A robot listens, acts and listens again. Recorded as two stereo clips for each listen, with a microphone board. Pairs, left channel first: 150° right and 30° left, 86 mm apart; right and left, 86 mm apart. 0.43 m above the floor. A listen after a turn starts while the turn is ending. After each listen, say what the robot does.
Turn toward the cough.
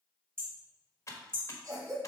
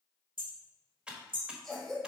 Found it: a cough, straight ahead, 2 to 4 m away.